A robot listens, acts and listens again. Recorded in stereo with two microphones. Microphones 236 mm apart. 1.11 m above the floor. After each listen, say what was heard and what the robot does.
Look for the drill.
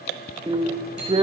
The drill: about 20° right or 160° right. Turn 20° right.
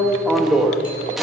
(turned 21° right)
Found it: a drill, straight ahead.